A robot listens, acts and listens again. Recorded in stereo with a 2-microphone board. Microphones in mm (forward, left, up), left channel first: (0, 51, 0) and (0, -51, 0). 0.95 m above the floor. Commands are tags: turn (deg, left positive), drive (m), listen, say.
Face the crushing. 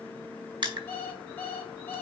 <turn deg="-55"/>
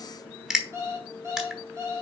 <say>Facing the crushing.</say>